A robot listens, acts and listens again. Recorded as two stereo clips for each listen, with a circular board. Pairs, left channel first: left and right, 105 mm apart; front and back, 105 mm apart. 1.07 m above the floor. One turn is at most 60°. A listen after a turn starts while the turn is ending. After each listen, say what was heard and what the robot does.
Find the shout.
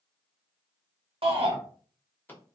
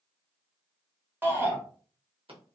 The shout: 110° right. Turn 60° right.
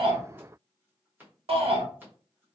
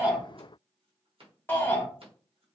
The shout is now 70° right. Turn 60° right.
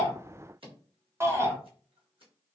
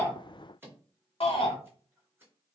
The shout is now 25° right. Turn 25° right.
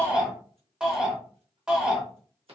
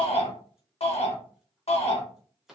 The shout is now 10° right. Turn 10° right.
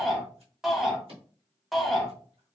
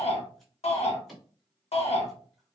Facing the shout, under 1 m away.